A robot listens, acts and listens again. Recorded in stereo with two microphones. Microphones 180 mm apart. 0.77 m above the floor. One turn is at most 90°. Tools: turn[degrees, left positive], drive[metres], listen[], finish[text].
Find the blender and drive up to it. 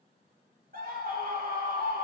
Action: listen[]
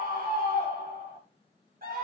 Action: listen[]
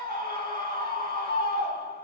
Action: finish[I can't make out a blender, only a scream.]